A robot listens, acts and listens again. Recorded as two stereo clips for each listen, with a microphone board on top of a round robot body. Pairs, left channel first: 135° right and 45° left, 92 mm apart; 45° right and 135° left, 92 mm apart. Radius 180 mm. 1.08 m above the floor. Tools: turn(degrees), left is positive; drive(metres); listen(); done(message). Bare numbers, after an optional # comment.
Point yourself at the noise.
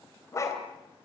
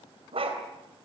# The dog barking: 165° left.
turn(165)
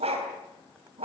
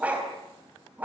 # The dog barking is now 60° left.
turn(60)
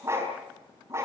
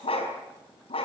# The dog barking is now 15° right.
turn(-15)
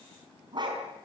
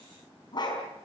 done("Facing the dog barking.")